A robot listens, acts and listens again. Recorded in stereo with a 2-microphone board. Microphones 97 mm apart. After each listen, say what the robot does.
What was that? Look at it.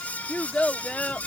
Turn 30° left.
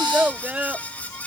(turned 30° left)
Turn 15° right.
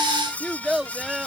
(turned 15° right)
Facing the child speaking.